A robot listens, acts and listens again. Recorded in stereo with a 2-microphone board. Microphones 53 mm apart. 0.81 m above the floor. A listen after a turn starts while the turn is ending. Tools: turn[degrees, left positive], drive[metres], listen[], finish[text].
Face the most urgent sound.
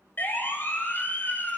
Thought: The siren: about 35° left or 145° left.
Action: turn[35]
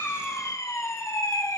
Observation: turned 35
Thought: So it is at 115° left.
Action: turn[115]
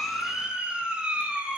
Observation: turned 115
Thought: The siren is now 15° right.
Action: turn[-15]
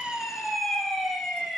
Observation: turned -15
Action: finish[Facing the siren.]